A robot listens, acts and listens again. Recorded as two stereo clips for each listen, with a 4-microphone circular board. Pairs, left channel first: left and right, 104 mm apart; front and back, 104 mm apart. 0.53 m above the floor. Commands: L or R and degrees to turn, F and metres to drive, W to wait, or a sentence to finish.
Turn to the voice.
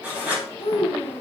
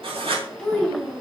L80
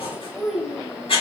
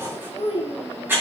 Found it: a child speaking, straight ahead, 2 to 4 m away.